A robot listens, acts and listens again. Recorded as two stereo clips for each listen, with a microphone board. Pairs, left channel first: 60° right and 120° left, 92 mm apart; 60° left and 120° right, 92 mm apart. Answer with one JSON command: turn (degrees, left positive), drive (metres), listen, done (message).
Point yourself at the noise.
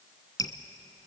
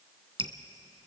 {"turn": -105}
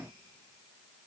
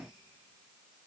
{"listen": true}
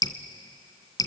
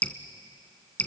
{"turn": -15}
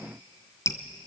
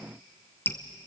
{"done": "Found it: dripping, straight ahead."}